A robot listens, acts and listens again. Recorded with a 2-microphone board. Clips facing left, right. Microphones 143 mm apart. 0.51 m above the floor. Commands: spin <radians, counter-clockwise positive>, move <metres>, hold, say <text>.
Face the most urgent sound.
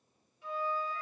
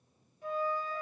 hold
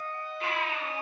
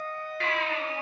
spin -1.57
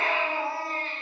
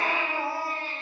spin -0.17
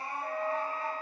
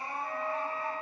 say Facing the baby crying.